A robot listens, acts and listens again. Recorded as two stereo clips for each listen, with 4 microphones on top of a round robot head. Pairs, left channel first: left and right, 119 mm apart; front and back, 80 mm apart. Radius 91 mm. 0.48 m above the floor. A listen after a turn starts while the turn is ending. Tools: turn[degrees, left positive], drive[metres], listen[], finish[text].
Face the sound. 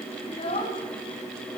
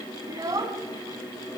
Thought: The child speaking: 140° left.
Action: turn[140]
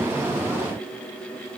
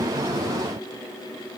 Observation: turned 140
Action: listen[]
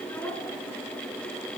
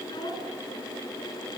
Thought: The child speaking is now 20° left.
Action: turn[20]
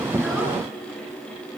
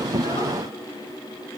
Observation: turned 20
Action: listen[]
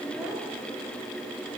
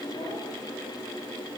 Action: finish[Facing the child speaking.]